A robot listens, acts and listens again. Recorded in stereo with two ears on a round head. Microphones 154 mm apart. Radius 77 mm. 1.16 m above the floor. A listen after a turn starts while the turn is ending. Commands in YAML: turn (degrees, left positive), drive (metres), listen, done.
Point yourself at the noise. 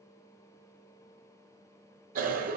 turn: -50
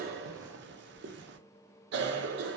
turn: -75
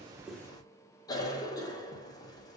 turn: 20
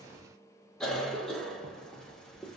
done: "Facing the cough, under 1 m away."